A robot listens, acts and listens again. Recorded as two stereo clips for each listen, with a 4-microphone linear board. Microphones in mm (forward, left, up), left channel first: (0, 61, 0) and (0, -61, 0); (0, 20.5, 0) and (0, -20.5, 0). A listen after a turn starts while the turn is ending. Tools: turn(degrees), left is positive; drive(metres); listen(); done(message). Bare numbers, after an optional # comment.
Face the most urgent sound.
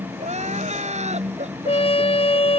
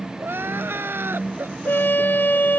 # The crying: about 70° right or 110° right.
turn(-70)
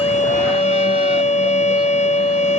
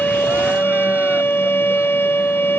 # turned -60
listen()
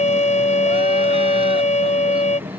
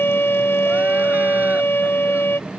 listen()
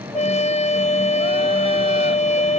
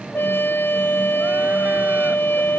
done("I heard crying, but can't make it out now. It was about 10° right or 50° right.")